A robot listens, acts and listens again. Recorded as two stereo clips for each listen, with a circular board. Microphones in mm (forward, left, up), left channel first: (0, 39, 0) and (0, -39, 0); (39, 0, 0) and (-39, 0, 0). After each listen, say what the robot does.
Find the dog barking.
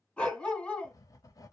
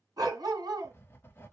Turn 165° left.
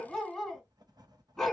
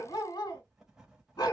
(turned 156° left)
Turn 10° left.
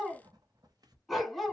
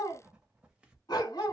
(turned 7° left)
Facing the dog barking.